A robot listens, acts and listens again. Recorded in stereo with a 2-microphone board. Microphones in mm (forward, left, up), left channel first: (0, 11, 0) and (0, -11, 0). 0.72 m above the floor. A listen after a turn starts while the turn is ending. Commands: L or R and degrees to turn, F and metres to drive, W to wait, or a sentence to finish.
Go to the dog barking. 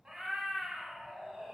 W
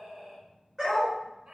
R30
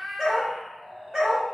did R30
R135
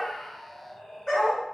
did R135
L20
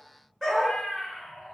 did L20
F1.0
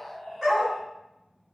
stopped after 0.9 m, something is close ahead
I am next to the dog barking.